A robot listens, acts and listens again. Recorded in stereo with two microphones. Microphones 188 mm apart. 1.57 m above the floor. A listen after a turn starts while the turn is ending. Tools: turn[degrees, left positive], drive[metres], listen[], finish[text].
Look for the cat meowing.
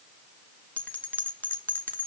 Action: listen[]
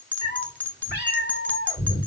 Thought: The cat meowing: about 65° left or 115° left.
Action: turn[65]
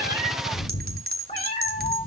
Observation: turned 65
Thought: So it is at 40° left.
Action: turn[40]
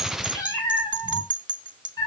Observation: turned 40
Thought: The cat meowing is now 25° left.
Action: turn[25]
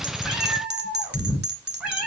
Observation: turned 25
Action: finish[Found it: a cat meowing, straight ahead, 2 to 4 m away.]